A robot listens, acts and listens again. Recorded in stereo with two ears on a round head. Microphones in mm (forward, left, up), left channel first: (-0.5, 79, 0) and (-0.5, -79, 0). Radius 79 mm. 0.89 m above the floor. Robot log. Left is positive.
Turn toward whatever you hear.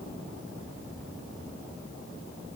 cmd idle
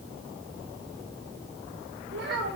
note: The child speaking: about 60° right or 120° right.
cmd yaw -60
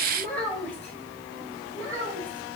note: So it is at 15° left.
cmd yaw +15
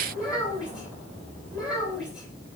end: Facing the child speaking.